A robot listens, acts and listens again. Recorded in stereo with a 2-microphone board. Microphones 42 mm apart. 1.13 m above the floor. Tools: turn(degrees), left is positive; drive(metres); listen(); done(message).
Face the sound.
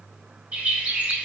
turn(degrees=-30)
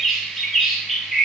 done("Facing the bird, 1 to 2 m away.")